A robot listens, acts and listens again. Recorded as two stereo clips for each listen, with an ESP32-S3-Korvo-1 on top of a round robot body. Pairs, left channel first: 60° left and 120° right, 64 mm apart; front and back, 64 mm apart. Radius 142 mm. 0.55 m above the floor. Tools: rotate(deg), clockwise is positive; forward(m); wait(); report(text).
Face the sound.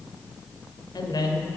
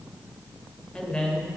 rotate(-75)
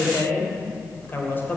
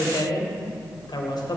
report("Facing the woman speaking, 2 to 4 m away.")